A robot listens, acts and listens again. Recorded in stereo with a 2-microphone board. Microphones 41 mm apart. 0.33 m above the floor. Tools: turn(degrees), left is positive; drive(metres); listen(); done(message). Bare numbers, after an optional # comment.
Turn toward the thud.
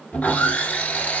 listen()
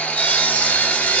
listen()
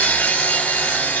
done("I can't make out a thud to turn to.")